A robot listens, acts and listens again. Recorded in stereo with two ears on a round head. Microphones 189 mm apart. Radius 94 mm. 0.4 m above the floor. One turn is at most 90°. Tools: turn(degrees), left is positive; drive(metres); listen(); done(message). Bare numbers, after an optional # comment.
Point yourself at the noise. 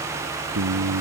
turn(-90)
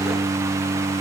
# So it is at 15° right.
turn(-15)
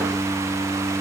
done("Facing the singing.")